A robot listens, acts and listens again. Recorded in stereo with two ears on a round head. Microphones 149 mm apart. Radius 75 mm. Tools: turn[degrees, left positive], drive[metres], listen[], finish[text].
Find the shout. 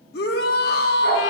Thought: The shout: about 65° left or 115° left.
Action: turn[65]
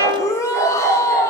Thought: So it is at 20° left.
Action: turn[20]
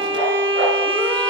Action: listen[]
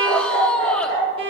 Thought: The shout is now 10° left.
Action: turn[10]
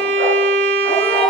Action: listen[]
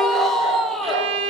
Action: finish[Found it: a shout, straight ahead, under 1 m away.]